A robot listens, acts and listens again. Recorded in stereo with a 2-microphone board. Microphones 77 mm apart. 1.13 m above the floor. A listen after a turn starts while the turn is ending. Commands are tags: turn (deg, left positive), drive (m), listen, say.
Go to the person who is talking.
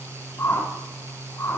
<listen/>
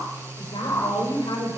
<turn deg="90"/>
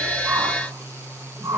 <listen/>
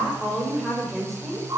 <drive m="1.0"/>
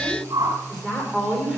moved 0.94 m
<drive m="1.0"/>
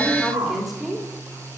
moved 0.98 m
<drive m="1.0"/>
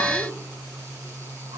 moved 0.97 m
<listen/>
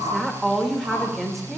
<drive m="1.0"/>
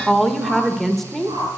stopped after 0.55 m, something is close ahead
<say>Arrived at the woman speaking, straight ahead.</say>